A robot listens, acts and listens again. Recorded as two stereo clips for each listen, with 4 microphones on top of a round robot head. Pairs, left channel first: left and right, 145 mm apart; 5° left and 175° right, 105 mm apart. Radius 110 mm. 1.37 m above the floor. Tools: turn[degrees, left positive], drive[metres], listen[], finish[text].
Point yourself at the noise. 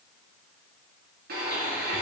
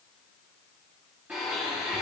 Thought: The blender: 95° right.
Action: turn[-95]
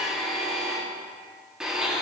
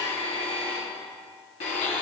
Action: finish[Found it: a blender, straight ahead.]